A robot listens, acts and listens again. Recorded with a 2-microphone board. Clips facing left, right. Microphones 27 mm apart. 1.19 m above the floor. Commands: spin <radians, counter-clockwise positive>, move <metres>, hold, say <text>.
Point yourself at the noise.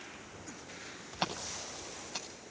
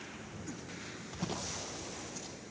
spin 1.57
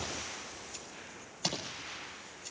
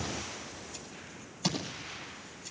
say Found it: scissors, straight ahead.